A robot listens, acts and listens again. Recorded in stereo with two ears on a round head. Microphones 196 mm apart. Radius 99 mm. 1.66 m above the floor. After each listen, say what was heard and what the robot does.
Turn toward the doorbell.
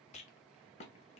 Keep listening.
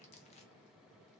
Keep listening.
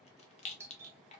Turn 30° right.
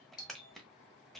So it is at 20° left. Turn 20° left.
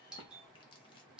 Facing the doorbell, under 1 m away.